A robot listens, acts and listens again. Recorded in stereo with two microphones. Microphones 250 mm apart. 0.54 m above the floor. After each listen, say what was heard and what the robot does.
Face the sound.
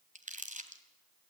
The crumpling: about 30° right or 150° right. Turn 30° right.
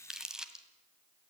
Found it: crumpling, straight ahead.